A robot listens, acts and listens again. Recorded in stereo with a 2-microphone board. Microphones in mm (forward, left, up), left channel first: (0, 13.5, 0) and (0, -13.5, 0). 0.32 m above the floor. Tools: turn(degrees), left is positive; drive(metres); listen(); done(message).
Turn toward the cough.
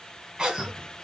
turn(degrees=-30)
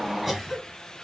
done("Found it: a cough, straight ahead, 1 to 2 m away.")